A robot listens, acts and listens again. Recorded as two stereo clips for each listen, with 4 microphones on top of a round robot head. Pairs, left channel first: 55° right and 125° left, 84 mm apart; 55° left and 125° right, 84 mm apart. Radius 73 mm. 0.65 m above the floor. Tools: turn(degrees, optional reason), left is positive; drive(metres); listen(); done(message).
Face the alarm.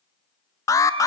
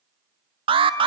turn(degrees=-105, reason="The alarm: 105° right.")
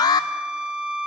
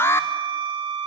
turn(degrees=-10, reason="The alarm is now 10° right.")
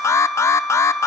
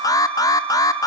done("Facing the alarm, under 1 m away.")